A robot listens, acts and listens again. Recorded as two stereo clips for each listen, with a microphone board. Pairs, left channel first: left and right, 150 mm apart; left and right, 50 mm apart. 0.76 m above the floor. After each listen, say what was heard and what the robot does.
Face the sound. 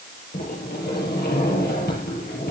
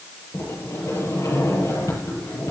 Turn 90° left.
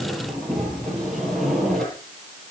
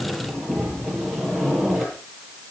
Found it: a sliding door, straight ahead, over 4 m away.